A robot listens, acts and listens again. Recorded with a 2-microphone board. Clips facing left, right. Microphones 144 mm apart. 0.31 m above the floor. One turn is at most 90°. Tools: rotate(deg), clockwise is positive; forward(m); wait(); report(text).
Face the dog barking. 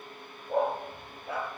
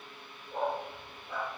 rotate(-90)
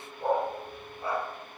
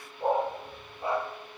rotate(20)
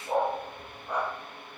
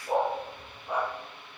rotate(10)
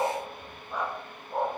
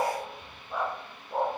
report("Found it: a dog barking, straight ahead.")